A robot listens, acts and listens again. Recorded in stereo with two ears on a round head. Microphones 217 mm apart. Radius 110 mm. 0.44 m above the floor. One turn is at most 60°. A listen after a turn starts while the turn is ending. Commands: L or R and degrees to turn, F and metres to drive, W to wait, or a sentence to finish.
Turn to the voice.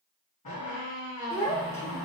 L30
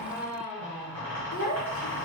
L60
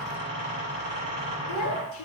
L60
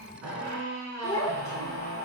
L15
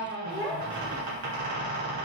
Found it: a child speaking, straight ahead, 1 to 2 m away.